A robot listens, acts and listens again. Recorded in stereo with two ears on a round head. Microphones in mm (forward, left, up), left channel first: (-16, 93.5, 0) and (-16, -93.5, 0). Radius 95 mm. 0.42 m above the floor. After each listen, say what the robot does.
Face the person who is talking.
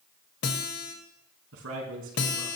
Turn 75° right.
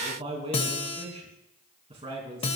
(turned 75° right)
Turn 30° right.
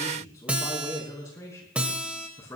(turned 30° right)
Turn 15° left.
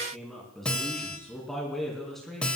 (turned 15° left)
Facing the man speaking, 2 to 4 m away.